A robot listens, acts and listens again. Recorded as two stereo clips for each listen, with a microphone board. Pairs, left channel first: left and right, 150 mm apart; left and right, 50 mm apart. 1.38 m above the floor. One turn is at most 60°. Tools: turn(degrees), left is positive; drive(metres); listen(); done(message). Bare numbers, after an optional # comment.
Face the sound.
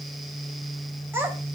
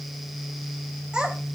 turn(-30)
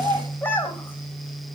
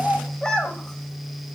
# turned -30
# So it is at 15° left.
turn(15)
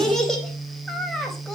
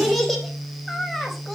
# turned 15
done("Facing the child speaking, 2 to 4 m away.")